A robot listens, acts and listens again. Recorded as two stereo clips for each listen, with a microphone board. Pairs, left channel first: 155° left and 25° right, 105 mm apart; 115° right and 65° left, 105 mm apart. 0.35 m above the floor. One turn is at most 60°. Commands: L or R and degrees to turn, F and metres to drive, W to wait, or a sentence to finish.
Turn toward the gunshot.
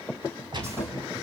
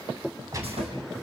L15
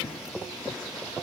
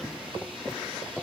I heard a gunshot from this way, but can't make it out now.